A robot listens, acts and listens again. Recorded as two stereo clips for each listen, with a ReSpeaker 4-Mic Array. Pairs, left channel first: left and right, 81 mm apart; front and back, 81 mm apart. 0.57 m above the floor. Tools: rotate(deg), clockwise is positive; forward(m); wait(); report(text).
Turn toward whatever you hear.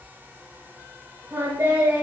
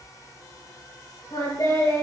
rotate(30)
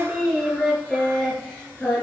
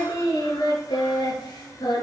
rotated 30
rotate(-15)
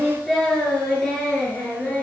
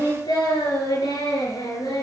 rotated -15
rotate(-15)
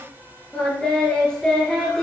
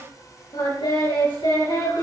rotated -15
rotate(-10)
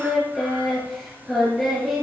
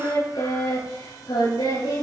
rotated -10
report("Facing the singing, over 4 m away.")